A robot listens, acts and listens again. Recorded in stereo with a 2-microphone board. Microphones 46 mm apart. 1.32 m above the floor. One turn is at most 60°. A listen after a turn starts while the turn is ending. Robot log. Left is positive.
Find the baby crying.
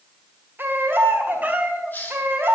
note: The baby crying: about 50° right or 130° right.
cmd yaw -50
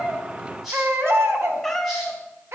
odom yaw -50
note: So it is at 75° right.
cmd yaw -60
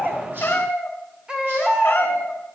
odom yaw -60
note: The baby crying is now 20° right.
cmd yaw -20
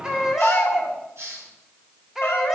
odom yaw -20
note: The baby crying is now 10° right.
cmd yaw -10
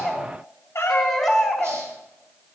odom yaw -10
end: Facing the baby crying, 2 to 4 m away.